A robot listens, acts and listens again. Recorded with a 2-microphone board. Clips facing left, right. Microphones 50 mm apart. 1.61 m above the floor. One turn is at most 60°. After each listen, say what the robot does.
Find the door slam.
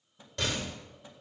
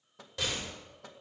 Turn 30° left.
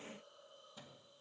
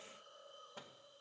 Keep listening.
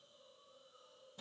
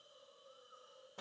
I heard a door slam, but can't make it out now. It was about 30° right or 150° left.